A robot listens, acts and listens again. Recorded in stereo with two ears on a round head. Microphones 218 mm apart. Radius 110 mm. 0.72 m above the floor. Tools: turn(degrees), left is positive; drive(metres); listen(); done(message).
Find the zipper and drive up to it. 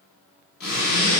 turn(degrees=40)
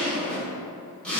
drive(metres=1.0)
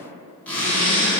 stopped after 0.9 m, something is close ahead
done("Arrived at the zipper, straight ahead.")